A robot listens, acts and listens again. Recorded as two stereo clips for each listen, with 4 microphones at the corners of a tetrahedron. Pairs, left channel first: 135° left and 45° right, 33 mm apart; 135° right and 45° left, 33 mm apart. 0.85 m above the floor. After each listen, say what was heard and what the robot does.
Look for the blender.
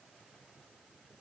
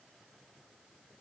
Keep listening.
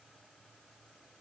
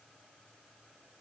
Keep listening.
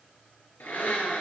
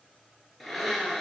The blender: 140° left. Turn 140° left.
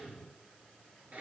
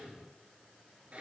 Found it: a blender, straight ahead, 2 to 4 m away.